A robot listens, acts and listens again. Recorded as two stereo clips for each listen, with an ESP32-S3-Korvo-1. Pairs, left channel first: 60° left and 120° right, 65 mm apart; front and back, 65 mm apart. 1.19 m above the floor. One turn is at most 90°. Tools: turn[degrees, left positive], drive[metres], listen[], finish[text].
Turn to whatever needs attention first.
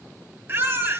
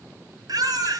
Thought: The baby crying: 170° right.
Action: turn[-90]
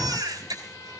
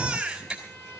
Thought: The baby crying is now 100° right.
Action: turn[-90]
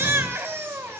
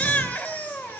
Thought: The baby crying is now 60° right.
Action: turn[-60]
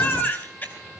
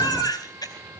Action: finish[Found it: a baby crying, straight ahead, over 4 m away.]